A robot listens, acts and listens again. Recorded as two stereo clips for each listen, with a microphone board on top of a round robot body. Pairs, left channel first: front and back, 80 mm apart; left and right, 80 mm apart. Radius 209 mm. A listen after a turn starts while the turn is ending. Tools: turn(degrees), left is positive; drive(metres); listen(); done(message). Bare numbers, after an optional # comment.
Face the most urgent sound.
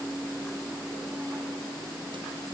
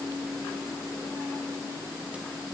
listen()
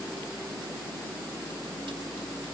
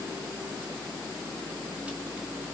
listen()
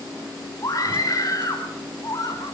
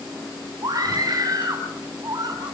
# The scream: 45° right.
turn(-45)
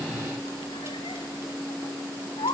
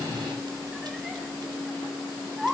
done("Facing the scream.")